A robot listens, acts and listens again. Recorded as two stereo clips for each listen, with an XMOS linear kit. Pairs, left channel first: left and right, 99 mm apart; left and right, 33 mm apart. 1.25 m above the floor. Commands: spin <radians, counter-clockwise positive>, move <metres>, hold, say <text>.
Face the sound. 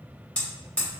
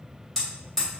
spin 0.52
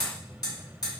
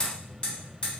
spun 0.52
spin 2.44
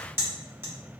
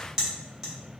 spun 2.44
spin -0.44
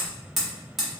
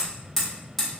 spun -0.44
say Found it: hammering, straight ahead, 1 to 2 m away.